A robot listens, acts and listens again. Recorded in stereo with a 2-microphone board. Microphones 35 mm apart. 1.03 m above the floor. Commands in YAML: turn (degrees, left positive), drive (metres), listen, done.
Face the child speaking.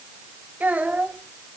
turn: -50
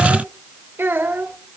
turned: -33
turn: -95
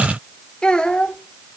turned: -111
turn: 25
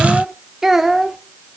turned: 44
turn: -10
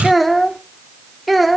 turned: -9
done: "Found it: a child speaking, straight ahead."